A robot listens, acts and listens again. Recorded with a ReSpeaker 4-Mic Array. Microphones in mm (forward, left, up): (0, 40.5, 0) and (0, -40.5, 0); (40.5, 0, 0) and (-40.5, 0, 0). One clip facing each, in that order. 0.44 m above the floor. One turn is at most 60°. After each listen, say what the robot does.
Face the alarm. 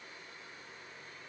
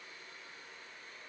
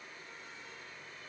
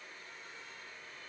Keep listening.
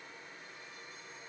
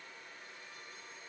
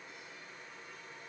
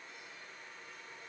Keep listening.
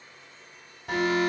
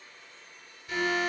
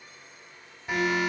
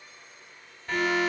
Turn 60° left.
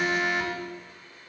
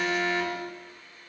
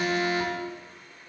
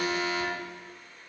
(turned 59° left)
Turn 20° left.
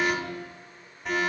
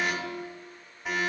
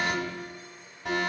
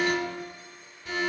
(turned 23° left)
Found it: an alarm, straight ahead, 2 to 4 m away.